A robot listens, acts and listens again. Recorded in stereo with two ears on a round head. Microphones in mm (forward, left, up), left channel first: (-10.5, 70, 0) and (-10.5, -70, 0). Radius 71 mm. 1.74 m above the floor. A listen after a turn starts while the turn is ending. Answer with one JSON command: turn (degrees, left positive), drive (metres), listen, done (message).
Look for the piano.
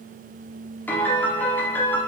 {"turn": 30}
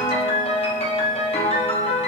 {"turn": 140}
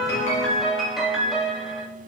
{"done": "Facing the piano, 1 to 2 m away."}